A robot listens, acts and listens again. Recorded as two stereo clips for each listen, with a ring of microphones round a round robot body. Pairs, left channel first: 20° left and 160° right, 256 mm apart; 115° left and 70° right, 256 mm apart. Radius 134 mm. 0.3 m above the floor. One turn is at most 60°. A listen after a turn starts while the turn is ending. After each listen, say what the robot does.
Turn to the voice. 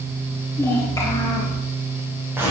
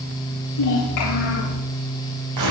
Turn 60° left.
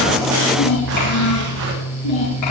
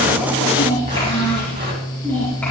Turn 30° left.
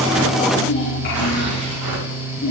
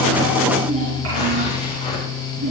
Turn 35° right.
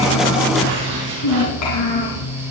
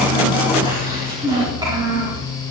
Facing the child speaking, over 4 m away.